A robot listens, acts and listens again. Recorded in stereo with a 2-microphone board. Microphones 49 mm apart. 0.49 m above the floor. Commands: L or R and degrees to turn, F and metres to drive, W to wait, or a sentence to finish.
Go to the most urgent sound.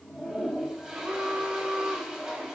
R50
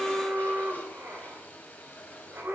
R75
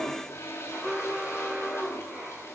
R15
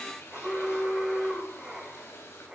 F1.0
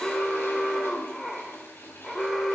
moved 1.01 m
F1.0
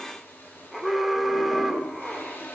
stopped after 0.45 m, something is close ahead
Arrived at the alarm, straight ahead.